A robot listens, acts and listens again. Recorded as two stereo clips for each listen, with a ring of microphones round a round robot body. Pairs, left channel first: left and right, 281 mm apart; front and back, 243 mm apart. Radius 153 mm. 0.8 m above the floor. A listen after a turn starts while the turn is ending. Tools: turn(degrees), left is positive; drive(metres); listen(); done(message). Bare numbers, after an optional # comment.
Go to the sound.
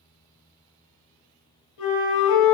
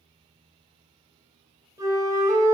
# The flute: 105° left.
turn(105)
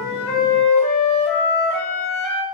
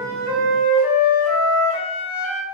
drive(1.0)
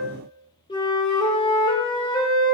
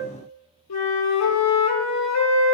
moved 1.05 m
# The flute is now 15° left.
turn(15)
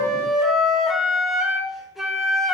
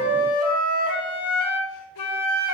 drive(1.0)
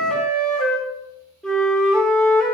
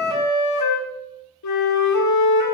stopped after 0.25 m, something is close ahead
done("Arrived at the flute, straight ahead.")